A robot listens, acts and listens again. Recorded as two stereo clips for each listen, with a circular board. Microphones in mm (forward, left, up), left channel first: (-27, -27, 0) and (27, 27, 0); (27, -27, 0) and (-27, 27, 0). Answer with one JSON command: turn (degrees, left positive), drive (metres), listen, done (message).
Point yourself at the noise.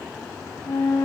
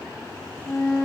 {"turn": -115}
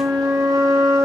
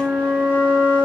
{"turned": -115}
{"turn": 20}
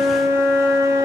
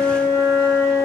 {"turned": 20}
{"done": "Found it: a flute, straight ahead."}